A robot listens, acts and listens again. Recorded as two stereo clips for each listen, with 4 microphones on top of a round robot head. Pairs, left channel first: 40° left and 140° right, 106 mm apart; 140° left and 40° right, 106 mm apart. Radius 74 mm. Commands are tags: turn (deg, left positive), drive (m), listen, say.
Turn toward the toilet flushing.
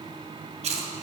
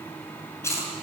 <listen/>
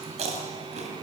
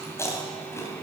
<listen/>
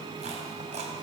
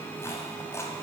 <say>I can't make out a toilet flushing, only chewing.</say>